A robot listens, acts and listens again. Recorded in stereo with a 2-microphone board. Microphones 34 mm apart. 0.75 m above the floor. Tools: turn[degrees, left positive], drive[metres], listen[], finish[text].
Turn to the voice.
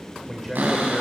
Action: turn[30]
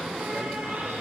Action: listen[]
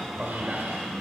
Thought: So it is at 20° right.
Action: turn[-20]
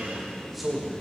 Action: finish[Facing the man speaking, 2 to 4 m away.]